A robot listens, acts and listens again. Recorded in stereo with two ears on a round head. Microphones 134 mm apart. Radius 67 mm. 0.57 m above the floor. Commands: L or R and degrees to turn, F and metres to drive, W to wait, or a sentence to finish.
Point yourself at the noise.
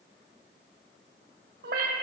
R70
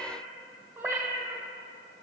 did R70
R20
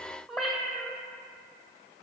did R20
Found it: a cat meowing, straight ahead, 1 to 2 m away.